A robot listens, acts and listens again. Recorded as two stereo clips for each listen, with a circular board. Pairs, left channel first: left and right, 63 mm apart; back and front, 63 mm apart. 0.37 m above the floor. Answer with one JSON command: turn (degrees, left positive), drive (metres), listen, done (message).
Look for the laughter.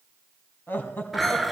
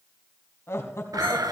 {"turn": 145}
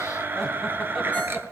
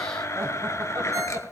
{"listen": true}
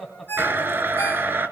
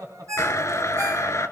{"done": "Found it: laughter, straight ahead."}